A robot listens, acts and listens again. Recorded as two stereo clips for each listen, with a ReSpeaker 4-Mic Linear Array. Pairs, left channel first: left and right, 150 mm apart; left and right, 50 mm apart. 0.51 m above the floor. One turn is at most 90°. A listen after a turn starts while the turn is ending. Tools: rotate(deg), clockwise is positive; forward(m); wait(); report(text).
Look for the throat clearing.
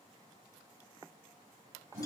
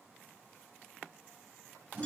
wait()
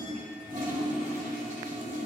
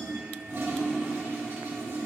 wait()
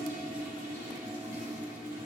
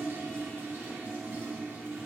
report("I can't make out throat clearing, only a toilet flushing.")